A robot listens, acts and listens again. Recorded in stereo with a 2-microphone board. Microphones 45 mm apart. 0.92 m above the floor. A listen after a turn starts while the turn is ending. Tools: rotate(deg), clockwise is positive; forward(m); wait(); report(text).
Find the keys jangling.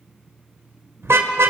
wait()
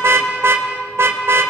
wait()
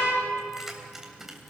rotate(30)
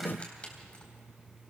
rotate(-25)
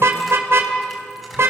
wait()
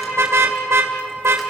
wait()
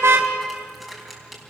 report("Found it: keys jangling, straight ahead, over 4 m away.")